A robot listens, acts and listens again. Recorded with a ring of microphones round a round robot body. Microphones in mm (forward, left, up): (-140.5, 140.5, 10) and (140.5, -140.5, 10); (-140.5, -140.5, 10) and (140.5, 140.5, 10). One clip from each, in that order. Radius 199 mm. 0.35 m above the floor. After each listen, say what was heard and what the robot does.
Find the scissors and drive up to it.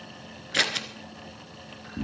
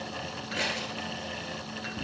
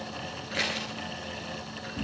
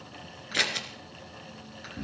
The scissors: 110° left. Turn 110° left.
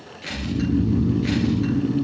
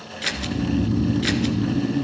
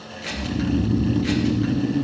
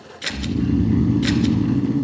Drive 1.0 m forward.
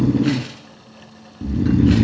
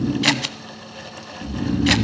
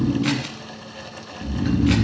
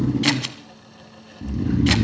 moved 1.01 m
The scissors is now 15° right. Turn 15° right.
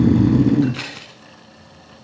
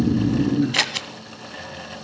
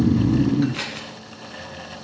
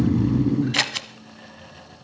Drive 1.0 m forward.
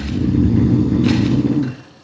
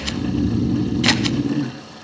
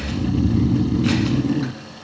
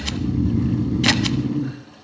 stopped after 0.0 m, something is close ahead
Keep listening.
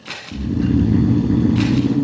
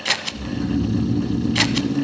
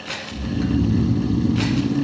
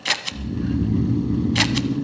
Arrived at the scissors, straight ahead.